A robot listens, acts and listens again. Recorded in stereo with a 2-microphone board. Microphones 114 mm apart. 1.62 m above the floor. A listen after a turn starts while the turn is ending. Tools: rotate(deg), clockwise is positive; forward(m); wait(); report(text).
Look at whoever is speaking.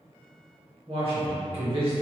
rotate(55)
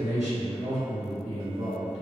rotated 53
rotate(75)
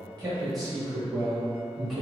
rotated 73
report("Found it: a man speaking, straight ahead.")